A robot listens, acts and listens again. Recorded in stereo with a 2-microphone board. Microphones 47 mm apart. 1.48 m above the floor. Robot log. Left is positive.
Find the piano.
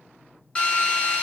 cmd idle
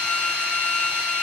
cmd idle
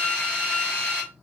end: I can't make out a piano to turn to.